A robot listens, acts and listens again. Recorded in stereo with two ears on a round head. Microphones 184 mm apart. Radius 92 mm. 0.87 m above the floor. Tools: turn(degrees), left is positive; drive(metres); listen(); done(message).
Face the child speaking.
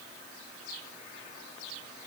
listen()
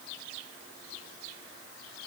listen()
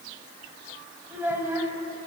turn(degrees=-30)
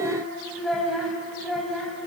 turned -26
turn(degrees=30)
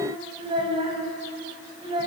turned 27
turn(degrees=-25)
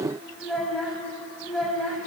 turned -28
done("Found it: a child speaking, straight ahead.")